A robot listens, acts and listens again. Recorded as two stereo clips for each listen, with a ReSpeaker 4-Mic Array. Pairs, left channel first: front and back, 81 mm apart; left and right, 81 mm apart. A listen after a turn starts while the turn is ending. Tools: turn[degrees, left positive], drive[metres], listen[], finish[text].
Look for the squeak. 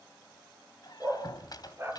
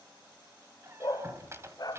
Thought: The squeak: 35° right.
Action: turn[-35]
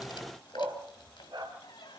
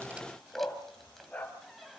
Action: finish[Facing the squeak, 2 to 4 m away.]